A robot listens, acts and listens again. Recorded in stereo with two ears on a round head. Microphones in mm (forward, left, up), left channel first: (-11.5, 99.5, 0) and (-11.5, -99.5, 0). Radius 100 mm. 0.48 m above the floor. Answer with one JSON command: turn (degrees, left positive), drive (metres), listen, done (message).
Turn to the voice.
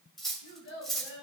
{"turn": 55}
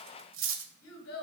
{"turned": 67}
{"turn": 55}
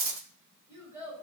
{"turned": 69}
{"turn": -15}
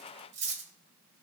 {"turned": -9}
{"listen": true}
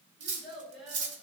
{"done": "Found it: a child speaking, straight ahead."}